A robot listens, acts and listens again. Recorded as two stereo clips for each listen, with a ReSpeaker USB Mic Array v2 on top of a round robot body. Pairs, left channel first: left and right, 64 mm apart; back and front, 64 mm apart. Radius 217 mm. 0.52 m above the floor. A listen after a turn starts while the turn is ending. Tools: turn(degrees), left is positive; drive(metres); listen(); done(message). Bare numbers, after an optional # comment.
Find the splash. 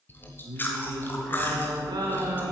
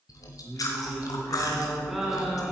listen()
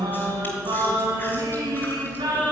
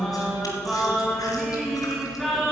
listen()
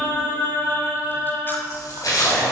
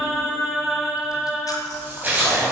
# The splash: 60° left.
turn(60)
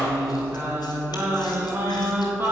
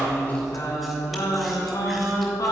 done("Facing where the splash came from. I can't hear it now.")